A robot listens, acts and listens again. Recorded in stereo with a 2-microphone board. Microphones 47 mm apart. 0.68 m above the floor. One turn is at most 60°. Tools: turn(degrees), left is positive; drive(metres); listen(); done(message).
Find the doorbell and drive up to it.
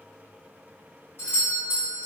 turn(degrees=50)
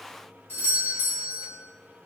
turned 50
turn(degrees=60)
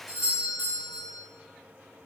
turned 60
drive(metres=1.0)
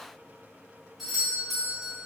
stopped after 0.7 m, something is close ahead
done("I am next to the doorbell.")